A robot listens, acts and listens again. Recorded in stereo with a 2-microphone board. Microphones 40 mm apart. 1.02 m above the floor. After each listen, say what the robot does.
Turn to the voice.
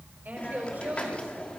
Turn 50° right.
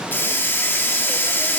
Keep listening.
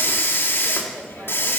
Keep listening.
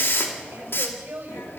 Turn 80° right.
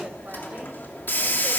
Keep listening.
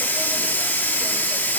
Keep listening.
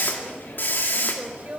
Turn 40° right.
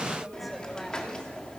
Keep listening.
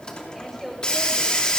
Found it: a woman speaking, straight ahead, over 4 m away.